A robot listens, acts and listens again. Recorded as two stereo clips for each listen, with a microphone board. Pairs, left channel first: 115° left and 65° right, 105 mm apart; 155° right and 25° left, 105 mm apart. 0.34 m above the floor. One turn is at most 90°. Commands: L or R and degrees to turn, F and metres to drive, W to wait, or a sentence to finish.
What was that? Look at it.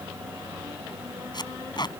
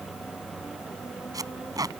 L75
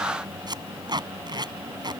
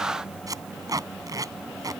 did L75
R25
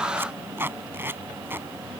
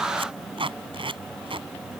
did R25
Found it: tape being pulled, straight ahead.